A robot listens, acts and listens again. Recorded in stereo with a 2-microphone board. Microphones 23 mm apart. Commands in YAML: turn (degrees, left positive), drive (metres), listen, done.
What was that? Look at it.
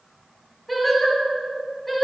turn: 30
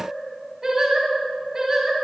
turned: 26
turn: -25
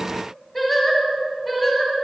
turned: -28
done: "Found it: singing, straight ahead."